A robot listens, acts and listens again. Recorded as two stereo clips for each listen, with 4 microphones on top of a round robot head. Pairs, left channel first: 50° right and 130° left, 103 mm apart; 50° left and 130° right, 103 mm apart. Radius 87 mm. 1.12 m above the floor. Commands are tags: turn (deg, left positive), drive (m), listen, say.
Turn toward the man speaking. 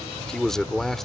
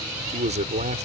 <turn deg="-140"/>
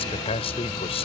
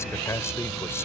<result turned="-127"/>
<turn deg="-15"/>
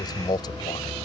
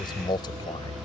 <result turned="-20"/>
<say>Facing the man speaking.</say>